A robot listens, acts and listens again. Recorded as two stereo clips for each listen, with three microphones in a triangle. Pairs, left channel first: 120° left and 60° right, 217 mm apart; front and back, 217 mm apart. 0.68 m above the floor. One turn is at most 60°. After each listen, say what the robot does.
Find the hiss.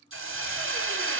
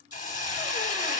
Turn 50° right.
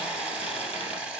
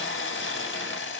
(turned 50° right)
Turn 25° left.
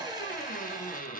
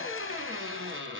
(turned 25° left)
Keep listening.
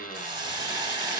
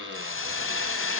Turn 10° left.
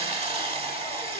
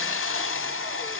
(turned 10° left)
Found it: a hiss, straight ahead.